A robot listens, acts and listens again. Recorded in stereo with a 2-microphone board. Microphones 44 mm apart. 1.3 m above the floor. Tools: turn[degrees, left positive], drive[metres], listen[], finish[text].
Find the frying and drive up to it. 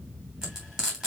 Thought: The frying: about 15° right or 165° right.
Action: turn[-15]
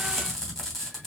Action: drive[1.0]
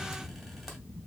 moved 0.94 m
Action: listen[]
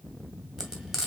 Thought: The frying is now 10° right.
Action: turn[-10]
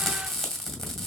Action: drive[1.0]
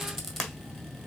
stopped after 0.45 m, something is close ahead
Action: finish[I am next to the frying.]